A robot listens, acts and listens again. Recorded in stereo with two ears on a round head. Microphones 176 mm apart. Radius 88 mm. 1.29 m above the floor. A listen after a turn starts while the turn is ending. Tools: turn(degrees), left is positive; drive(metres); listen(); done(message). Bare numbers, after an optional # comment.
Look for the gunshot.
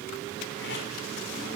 listen()
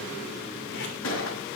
# The gunshot: about 70° left or 110° left.
turn(70)
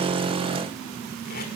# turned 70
listen()
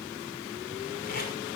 done("I heard a gunshot, but can't make it out now. It was about straight ahead or 40° left.")